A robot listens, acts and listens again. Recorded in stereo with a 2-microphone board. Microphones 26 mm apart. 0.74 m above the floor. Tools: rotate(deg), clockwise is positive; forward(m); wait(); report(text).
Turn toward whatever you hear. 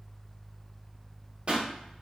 rotate(40)
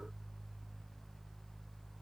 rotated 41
wait()
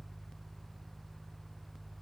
report("I heard a pop, but can't make it out now. It was about straight ahead or 95° right.")